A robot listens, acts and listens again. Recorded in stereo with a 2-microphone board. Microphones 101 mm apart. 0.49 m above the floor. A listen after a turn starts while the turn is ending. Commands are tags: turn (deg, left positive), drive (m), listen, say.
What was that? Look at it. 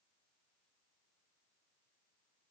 <listen/>
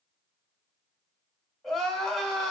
<turn deg="30"/>
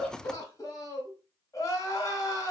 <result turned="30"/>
<turn deg="145"/>
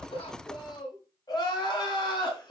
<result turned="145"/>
<turn deg="45"/>
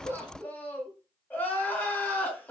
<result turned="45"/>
<turn deg="15"/>
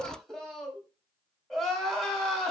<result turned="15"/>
<say>Facing the crying, 1 to 2 m away.</say>